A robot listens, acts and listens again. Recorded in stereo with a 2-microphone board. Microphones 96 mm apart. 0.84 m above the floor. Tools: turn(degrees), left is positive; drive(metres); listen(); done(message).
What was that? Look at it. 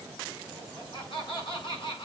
turn(degrees=60)
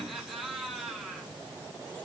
done("Found it: laughter, straight ahead.")